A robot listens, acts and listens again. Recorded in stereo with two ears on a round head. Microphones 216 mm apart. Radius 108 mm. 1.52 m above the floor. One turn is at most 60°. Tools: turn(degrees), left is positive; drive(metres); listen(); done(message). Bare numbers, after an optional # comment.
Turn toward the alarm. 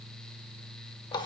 listen()
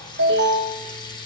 # The alarm: about 50° right or 130° right.
turn(-50)
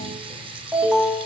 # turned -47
done("Found it: an alarm, straight ahead, 2 to 4 m away.")